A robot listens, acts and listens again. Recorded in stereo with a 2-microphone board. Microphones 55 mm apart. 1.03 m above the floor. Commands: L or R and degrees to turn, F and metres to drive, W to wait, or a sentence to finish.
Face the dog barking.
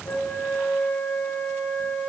W
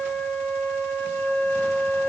W
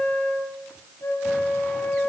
I can't make out a dog barking, only a flute.